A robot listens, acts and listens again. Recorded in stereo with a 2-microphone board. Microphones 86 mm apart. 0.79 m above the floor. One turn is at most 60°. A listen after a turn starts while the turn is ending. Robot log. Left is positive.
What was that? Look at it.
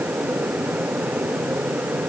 cmd idle
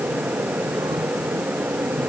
cmd idle
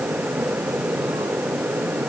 end: I can't make out anything.